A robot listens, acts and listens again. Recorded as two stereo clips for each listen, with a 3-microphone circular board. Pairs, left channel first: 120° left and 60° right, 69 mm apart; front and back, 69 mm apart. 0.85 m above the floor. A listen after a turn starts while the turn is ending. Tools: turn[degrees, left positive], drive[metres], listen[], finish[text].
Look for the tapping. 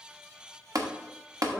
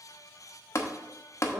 Thought: The tapping: 40° right.
Action: turn[-40]
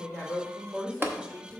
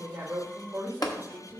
Action: finish[Found it: tapping, straight ahead, 1 to 2 m away.]